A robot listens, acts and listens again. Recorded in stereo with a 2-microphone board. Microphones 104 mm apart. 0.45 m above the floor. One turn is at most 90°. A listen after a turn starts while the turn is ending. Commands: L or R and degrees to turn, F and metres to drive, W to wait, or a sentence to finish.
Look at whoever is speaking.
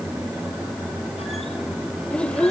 L30
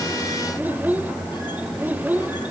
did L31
R20
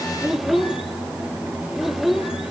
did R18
Found it: a child speaking, straight ahead, under 1 m away.